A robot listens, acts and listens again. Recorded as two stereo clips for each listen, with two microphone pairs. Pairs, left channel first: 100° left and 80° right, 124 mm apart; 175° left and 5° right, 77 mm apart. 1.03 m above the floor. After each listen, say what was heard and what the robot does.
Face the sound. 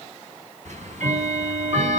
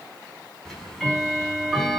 The ticking: 100° right. Turn 100° right.
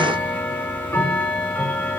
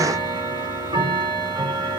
The ticking is now 25° left. Turn 25° left.
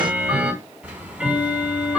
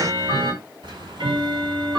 Found it: ticking, straight ahead, over 4 m away.